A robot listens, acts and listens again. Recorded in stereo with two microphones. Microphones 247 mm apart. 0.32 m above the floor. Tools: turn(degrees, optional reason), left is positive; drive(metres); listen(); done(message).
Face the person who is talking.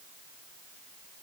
listen()
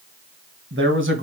turn(degrees=-50, reason="The man speaking: about 50° right or 130° right.")
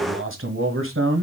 turn(degrees=-70, reason="So it is at 70° right.")
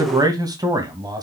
turn(degrees=-15, reason="The man speaking is now 15° right.")
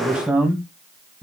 done("Found it: a man speaking, straight ahead, 1 to 2 m away.")